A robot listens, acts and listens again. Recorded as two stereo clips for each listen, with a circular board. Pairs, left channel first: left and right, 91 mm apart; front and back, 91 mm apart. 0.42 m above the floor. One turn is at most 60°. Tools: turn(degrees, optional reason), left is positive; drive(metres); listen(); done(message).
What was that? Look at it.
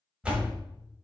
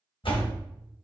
turn(degrees=-10, reason="The door slam: 10° right.")
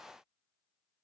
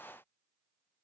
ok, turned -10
done("Facing where the door slam came from. I can't hear it now.")